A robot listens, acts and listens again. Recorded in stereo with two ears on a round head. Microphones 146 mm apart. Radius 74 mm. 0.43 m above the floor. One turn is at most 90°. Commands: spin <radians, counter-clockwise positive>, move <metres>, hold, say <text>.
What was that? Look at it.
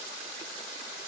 hold
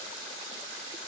hold
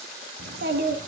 spin -1.22
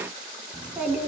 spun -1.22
say Found it: a child speaking, straight ahead.